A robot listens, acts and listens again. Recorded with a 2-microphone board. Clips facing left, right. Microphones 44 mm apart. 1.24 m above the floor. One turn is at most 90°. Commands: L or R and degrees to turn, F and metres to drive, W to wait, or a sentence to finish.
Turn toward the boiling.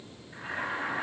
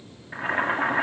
R55
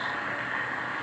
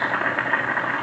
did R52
R70
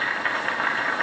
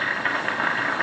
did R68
Facing the boiling, 1 to 2 m away.